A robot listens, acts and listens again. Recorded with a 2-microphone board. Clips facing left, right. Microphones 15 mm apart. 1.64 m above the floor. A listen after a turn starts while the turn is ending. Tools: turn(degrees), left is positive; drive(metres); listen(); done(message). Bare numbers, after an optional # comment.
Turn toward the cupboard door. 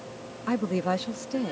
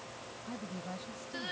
listen()
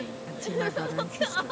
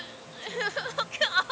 listen()
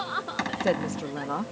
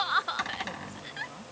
turn(30)
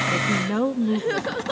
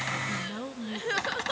listen()
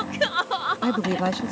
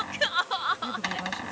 # So it is at 15° right.
turn(-15)
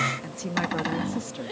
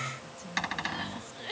done("Found it: a cupboard door, straight ahead.")